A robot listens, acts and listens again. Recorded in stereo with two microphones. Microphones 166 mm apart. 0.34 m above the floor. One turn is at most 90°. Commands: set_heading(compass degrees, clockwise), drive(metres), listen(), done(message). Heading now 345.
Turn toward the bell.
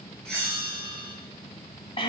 set_heading(315)
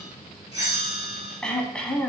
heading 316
set_heading(341)
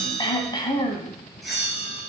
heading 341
done("Found it: a bell, straight ahead.")